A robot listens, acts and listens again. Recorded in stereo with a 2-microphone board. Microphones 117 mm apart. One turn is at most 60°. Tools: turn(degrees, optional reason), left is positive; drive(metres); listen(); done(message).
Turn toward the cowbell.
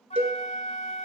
turn(degrees=-60, reason="The cowbell: about 70° right or 110° right.")
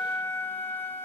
done("Found it: a cowbell, straight ahead, 1 to 2 m away.")